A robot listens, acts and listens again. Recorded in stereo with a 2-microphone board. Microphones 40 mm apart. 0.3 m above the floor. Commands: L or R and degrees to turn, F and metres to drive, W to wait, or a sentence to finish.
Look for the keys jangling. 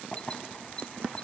L30
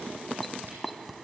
Facing the keys jangling.